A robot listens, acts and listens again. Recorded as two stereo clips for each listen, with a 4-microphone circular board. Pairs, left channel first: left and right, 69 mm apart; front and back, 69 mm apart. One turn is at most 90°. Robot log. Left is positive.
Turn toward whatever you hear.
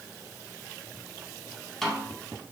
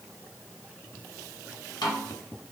end: Facing the snare drum.